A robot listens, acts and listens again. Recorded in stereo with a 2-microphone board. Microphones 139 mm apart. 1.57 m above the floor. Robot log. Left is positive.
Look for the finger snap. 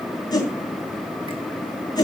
cmd idle
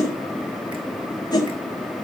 cmd idle
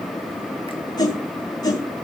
end: I can't make out a finger snap, only a whoosh.